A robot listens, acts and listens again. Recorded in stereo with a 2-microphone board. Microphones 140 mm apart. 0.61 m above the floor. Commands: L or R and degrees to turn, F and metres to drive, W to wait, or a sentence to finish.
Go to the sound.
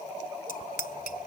L90
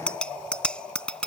F1.0
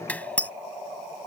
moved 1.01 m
L10
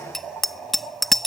F1.0
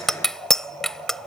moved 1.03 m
F1.0
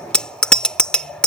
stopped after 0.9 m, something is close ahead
Arrived at the bicycle bell, straight ahead.